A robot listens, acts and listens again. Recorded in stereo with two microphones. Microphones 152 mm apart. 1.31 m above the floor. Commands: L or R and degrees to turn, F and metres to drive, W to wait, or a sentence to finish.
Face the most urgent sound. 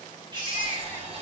R35
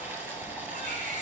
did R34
W
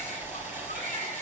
W
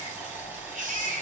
R110
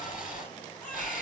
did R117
W
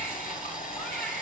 W
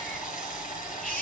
I heard a baby crying from this way, but can't make it out now.